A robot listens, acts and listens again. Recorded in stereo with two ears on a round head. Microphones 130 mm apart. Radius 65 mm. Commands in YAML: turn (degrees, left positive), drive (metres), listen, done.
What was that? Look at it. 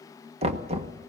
turn: -45
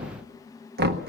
turn: -90
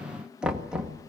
done: "Facing the knocking."